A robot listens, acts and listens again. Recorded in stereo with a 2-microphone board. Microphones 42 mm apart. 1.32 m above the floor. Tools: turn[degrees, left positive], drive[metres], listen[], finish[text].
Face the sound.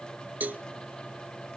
Thought: The cowbell: about 45° right or 135° right.
Action: turn[-45]
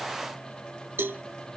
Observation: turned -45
Thought: So it is at 80° right.
Action: turn[-80]
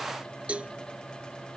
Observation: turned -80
Thought: The cowbell is now 30° right.
Action: turn[-30]
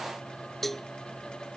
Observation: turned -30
Thought: The cowbell is now 10° left.
Action: turn[10]
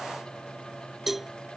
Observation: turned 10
Action: finish[Facing the cowbell.]